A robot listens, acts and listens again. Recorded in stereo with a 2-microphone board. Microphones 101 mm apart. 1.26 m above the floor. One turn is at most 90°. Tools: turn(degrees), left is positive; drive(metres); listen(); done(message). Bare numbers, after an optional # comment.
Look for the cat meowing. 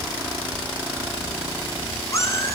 # The cat meowing: about 30° left or 150° left.
turn(30)
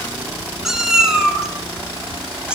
# So it is at 10° right.
turn(-10)
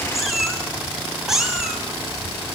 done("Facing the cat meowing.")